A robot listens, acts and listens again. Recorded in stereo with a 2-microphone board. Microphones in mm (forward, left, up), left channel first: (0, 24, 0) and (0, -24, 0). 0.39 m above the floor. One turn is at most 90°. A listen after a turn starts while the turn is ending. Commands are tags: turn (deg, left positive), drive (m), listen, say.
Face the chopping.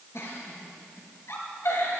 <listen/>
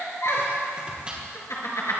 <turn deg="-20"/>
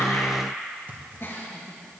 <turn deg="-90"/>
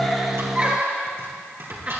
<turn deg="-55"/>
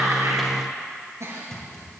<turn deg="10"/>
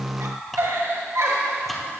<say>Found it: chopping, straight ahead, 2 to 4 m away.</say>